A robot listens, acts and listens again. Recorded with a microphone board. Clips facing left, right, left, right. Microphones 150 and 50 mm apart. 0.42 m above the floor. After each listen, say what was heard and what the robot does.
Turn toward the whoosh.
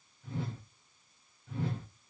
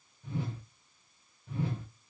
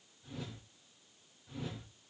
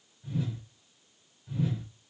Turn 30° right.
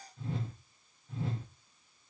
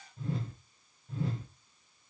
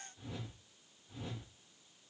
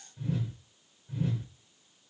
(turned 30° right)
So it is at 140° right. Turn 140° right.
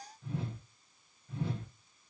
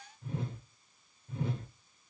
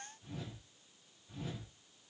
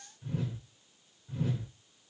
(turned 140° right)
The whoosh is now 50° right. Turn 50° right.
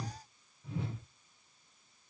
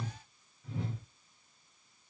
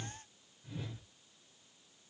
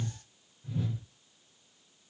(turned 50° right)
Facing the whoosh.